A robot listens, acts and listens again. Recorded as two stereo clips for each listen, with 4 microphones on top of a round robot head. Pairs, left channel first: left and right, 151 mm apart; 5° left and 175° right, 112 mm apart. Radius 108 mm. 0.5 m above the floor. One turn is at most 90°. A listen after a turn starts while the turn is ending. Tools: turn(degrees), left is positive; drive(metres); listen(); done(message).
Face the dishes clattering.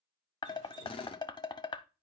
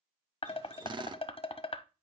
turn(degrees=30)
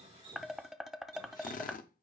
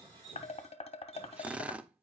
done("Found it: dishes clattering, straight ahead.")